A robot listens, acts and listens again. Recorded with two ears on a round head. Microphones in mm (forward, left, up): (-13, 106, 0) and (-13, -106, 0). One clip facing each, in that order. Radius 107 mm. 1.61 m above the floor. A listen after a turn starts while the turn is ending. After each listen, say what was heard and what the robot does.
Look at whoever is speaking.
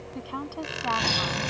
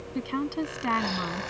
The woman speaking: about 30° right or 150° right. Turn 30° right.
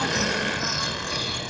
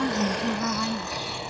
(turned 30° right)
Keep listening.
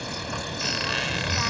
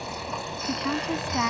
Keep listening.
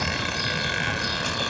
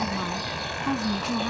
I heard a woman speaking, but can't make it out now. It was about straight ahead or 120° right.